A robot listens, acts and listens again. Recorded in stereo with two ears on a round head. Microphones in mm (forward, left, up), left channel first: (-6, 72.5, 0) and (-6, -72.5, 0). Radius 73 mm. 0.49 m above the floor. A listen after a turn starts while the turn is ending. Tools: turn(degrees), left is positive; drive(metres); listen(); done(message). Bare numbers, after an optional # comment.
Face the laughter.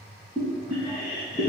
# The laughter: about 55° left or 125° left.
turn(55)
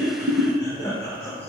# So it is at 15° left.
turn(15)
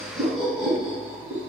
done("Found it: laughter, straight ahead, 1 to 2 m away.")